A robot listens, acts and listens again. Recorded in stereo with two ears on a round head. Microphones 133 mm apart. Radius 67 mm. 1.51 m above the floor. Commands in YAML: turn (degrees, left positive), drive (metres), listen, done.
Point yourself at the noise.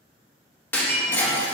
turn: 30
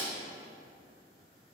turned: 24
listen: true
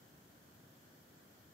done: "I heard breaking glass, but can't make it out now. It was about 10° right or 145° left."